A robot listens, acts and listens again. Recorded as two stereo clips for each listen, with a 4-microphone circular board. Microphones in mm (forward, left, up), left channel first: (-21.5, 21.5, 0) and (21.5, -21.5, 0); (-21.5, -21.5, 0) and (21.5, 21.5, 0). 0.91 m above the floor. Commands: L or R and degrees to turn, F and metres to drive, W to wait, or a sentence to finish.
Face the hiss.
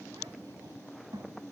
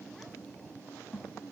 W
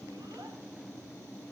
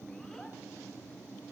W
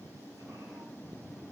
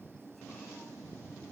I can't make out a hiss, only a child speaking.